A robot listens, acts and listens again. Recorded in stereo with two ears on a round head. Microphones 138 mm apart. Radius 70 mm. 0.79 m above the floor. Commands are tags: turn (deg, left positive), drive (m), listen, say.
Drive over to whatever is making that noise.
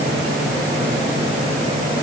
<listen/>
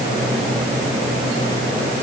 <listen/>
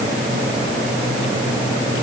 <say>I can't make out anything to turn to.</say>